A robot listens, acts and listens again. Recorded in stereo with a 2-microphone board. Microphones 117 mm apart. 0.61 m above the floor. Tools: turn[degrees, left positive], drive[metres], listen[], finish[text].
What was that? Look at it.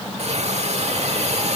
Thought: The hiss: about 65° right or 115° right.
Action: turn[-65]
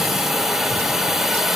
Action: finish[Found it: a hiss, straight ahead.]